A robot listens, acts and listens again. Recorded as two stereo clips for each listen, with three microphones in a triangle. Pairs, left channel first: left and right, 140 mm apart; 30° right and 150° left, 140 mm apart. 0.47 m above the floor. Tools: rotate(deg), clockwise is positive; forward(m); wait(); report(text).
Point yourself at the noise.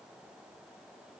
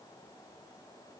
wait()
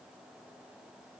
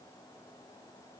wait()
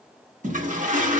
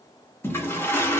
rotate(100)
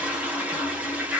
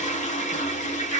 rotate(10)
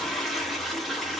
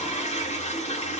report("Found it: a toilet flushing, straight ahead, under 1 m away.")